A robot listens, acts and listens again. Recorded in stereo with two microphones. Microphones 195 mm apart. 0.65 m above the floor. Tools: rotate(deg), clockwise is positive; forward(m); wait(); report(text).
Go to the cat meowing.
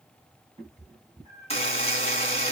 rotate(15)
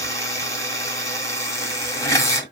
wait()
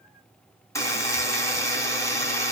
wait()
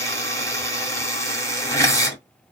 report("I heard a cat meowing, but can't make it out now. It was about straight ahead or 150° right. I did not reach it.")